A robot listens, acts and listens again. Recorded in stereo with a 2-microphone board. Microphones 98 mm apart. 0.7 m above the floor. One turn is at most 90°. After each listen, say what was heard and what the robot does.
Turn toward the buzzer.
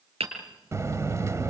The buzzer: about 30° right or 150° right. Turn 30° right.
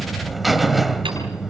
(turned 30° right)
Facing the buzzer, 1 to 2 m away.